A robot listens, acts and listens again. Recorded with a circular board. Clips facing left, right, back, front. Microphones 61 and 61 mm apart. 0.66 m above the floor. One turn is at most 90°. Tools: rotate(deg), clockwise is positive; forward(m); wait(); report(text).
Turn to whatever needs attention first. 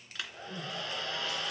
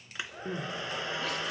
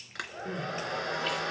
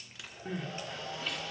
rotate(90)
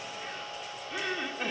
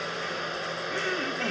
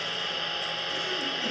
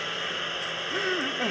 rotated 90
rotate(10)
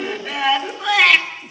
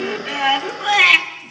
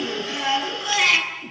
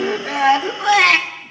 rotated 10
report("Found it: crying, straight ahead, 2 to 4 m away.")